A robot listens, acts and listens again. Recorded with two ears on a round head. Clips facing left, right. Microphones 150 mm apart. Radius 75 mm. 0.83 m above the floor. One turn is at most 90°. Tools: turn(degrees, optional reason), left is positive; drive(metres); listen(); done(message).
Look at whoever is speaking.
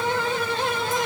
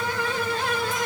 listen()
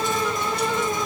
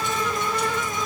listen()
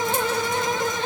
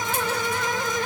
done("I can't make out anyone speaking to turn to.")